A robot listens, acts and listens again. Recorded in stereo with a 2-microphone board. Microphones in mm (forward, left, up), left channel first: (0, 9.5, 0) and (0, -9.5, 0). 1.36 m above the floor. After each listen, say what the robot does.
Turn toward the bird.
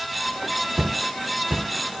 Keep listening.
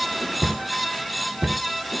Keep listening.
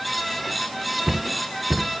I can't make out a bird to turn to.